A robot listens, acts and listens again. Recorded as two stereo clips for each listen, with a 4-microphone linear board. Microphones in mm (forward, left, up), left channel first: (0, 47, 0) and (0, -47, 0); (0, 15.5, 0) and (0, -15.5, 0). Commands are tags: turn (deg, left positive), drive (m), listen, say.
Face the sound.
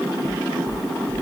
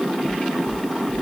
<turn deg="-25"/>
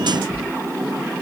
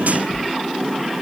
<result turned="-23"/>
<turn deg="-130"/>
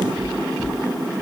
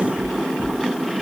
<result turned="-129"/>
<say>Facing the knocking.</say>